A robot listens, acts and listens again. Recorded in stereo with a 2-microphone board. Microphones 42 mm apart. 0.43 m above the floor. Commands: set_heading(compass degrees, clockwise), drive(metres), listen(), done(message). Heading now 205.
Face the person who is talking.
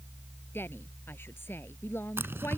set_heading(140)
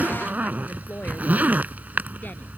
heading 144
listen()
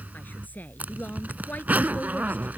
set_heading(99)
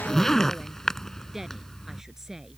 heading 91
set_heading(101)
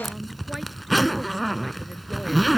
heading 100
listen()
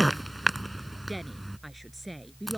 done("Facing the woman speaking.")